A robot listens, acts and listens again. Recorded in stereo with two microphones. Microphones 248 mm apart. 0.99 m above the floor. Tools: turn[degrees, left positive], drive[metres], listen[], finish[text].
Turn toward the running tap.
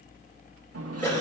Thought: The running tap: about 70° right or 110° right.
Action: turn[-70]
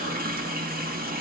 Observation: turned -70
Thought: So it is at 35° right.
Action: turn[-35]
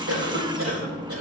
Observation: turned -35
Thought: The running tap is now 20° right.
Action: turn[-20]
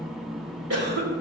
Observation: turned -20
Action: finish[Facing the running tap, 1 to 2 m away.]